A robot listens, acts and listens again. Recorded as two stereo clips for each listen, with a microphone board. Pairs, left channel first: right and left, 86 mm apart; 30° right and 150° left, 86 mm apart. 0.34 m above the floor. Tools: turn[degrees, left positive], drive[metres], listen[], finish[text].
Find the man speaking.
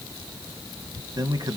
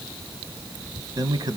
Thought: The man speaking: 120° left.
Action: turn[120]
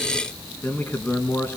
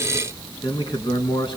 Thought: The man speaking is now 25° right.
Action: turn[-25]
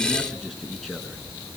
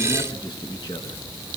Action: finish[Found it: a man speaking, straight ahead.]